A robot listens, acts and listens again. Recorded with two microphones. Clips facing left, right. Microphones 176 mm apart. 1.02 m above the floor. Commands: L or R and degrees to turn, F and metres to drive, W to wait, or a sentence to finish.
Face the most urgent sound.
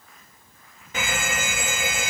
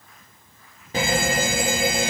R35
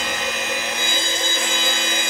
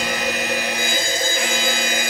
Found it: a fire alarm, straight ahead.